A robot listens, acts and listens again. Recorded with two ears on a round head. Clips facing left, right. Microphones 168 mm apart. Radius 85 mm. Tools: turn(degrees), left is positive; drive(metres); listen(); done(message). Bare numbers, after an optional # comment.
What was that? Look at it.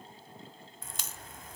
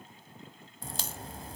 # The crack: about 30° right or 150° right.
turn(-30)
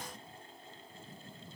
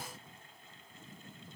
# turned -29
listen()
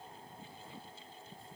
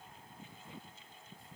done("I heard a crack, but can't make it out now. It was about straight ahead or 125° right.")